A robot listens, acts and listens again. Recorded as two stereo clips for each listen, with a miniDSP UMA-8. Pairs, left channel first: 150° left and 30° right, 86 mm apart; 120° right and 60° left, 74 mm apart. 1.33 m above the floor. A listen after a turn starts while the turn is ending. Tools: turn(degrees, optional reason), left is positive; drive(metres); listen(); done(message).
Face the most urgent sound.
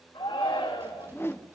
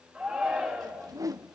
turn(degrees=135, reason="The shout: 135° left.")
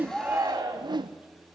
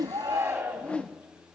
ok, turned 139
done("Facing the shout, 2 to 4 m away.")